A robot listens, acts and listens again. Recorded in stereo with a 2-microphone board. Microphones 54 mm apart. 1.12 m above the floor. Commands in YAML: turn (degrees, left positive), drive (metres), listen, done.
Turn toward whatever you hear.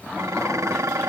turn: -70
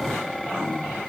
done: "Found it: dishes clattering, straight ahead."